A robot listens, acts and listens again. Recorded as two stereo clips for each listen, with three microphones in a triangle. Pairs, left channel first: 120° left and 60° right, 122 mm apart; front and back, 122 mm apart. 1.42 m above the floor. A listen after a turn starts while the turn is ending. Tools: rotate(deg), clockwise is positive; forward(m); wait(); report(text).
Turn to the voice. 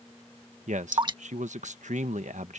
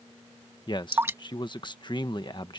rotate(50)
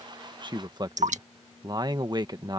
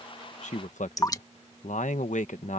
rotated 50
report("Facing the man speaking.")